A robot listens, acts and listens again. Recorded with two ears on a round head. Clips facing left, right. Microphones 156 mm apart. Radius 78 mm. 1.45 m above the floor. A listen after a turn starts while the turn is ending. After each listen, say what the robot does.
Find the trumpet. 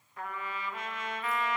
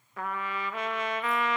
Turn 55° right.
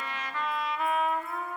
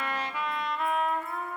Facing the trumpet.